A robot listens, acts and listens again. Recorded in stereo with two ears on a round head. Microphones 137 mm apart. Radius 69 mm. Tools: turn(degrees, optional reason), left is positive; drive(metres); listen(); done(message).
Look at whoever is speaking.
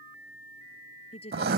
turn(degrees=40, reason="The woman speaking: about 40° left or 140° left.")
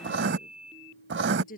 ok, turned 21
turn(degrees=120, reason="So it is at 120° left.")
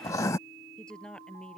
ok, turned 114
done("Facing the woman speaking.")